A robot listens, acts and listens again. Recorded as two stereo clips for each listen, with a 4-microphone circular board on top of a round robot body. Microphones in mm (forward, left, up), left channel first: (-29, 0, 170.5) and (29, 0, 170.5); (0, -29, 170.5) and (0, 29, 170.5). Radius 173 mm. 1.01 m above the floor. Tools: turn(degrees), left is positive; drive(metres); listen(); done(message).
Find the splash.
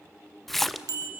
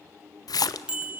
turn(degrees=-90)
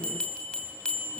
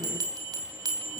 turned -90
done("I heard a splash from this way, but can't make it out now.")